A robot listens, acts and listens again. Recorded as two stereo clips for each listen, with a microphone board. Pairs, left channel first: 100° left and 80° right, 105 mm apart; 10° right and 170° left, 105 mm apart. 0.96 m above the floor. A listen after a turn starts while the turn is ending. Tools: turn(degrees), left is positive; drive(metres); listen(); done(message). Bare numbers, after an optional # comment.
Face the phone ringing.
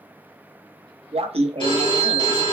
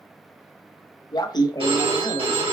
# The phone ringing: 140° left.
turn(140)
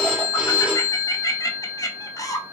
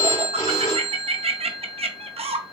done("Facing the phone ringing, 1 to 2 m away.")